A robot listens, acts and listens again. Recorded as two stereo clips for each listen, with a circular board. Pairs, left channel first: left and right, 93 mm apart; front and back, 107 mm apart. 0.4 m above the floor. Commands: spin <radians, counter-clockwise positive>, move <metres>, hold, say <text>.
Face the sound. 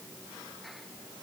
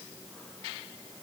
hold
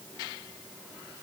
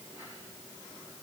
hold
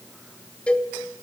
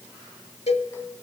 spin 0.17
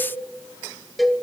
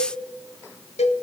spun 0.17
say Found it: a cowbell, straight ahead.